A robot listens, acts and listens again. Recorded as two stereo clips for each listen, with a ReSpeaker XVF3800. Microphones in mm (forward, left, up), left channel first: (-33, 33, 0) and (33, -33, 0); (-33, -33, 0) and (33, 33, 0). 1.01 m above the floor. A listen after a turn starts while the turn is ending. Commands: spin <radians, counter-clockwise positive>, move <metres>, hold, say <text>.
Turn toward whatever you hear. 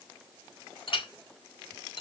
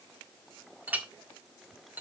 spin 2.01
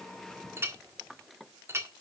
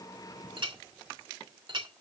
spin 0.26
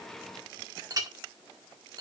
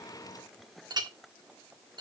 say Facing the clink, 1 to 2 m away.